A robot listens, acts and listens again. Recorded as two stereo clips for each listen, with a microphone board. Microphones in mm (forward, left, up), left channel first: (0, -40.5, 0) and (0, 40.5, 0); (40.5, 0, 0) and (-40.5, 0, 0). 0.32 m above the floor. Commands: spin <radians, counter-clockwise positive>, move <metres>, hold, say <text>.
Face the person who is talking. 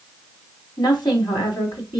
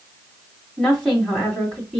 spin -1.48
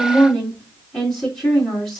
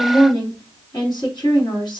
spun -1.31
spin -0.17
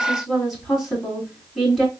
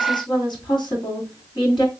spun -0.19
say Found it: a woman speaking, straight ahead.